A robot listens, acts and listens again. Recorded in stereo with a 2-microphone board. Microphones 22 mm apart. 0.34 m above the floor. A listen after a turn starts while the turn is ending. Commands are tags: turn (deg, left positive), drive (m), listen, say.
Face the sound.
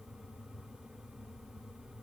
<listen/>
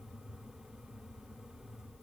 <listen/>
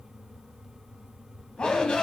<turn deg="50"/>
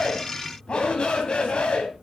<turn deg="70"/>
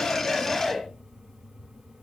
<say>Found it: a shout, straight ahead.</say>